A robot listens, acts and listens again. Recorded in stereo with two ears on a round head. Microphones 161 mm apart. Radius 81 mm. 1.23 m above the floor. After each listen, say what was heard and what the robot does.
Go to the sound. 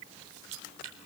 Turn 90° right.
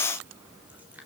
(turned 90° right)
Keep listening.
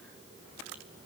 Keep listening.
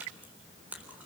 The chewing is now 10° right. Turn 10° right.
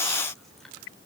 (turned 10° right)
Keep listening.
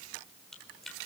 Drive 1.0 m forward.
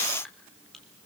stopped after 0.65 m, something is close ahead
Something is in my way. I am facing the chewing but have not reached it.